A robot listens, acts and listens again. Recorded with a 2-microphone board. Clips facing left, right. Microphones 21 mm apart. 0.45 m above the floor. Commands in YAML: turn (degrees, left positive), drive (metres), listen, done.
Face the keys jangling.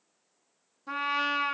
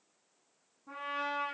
listen: true
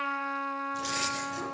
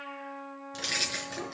turn: -65
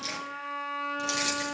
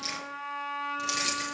done: "Facing the keys jangling, over 4 m away."